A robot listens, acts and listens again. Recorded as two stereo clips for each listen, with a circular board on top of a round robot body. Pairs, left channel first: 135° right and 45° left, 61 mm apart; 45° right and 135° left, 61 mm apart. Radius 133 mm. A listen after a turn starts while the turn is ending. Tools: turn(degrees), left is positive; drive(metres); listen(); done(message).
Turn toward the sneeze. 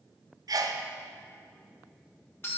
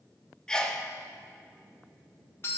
turn(degrees=35)
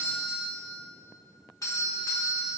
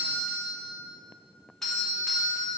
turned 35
done("Facing where the sneeze came from. I can't hear it now.")